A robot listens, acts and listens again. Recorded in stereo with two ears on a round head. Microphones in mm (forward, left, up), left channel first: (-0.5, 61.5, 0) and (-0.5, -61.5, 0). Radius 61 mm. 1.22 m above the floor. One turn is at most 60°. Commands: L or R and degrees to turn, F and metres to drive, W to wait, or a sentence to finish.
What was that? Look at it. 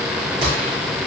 R45
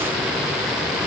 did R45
W
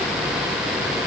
I heard a gunshot, but can't make it out now. It was about straight ahead or 90° right.